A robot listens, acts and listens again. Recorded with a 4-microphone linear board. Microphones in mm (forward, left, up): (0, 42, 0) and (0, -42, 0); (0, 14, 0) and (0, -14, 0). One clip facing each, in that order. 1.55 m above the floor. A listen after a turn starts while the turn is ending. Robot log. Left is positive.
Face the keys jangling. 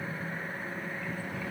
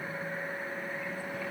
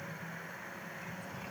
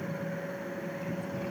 cmd idle
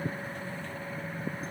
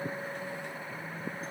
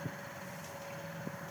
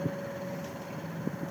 cmd idle
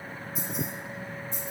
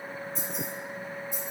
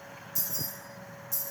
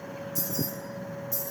cmd yaw -30
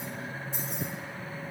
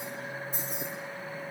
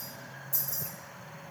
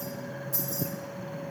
note: So it is at 130° right.
cmd yaw -130
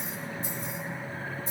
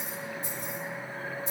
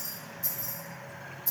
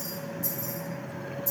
note: The keys jangling is now 40° left.
cmd yaw +40
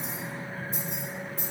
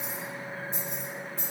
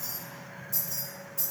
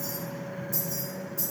end: Facing the keys jangling, 2 to 4 m away.